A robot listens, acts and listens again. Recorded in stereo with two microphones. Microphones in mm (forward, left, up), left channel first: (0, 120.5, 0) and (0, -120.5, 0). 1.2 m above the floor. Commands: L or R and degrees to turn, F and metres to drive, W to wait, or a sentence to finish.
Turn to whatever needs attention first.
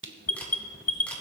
L70
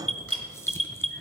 Facing the alarm.